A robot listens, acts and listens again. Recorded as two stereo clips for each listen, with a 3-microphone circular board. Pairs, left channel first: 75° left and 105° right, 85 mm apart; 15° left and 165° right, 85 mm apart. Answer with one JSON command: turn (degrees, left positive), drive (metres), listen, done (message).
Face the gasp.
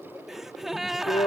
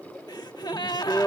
{"turn": -20}
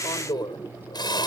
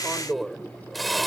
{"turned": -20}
{"done": "Facing where the gasp came from. I can't hear it now."}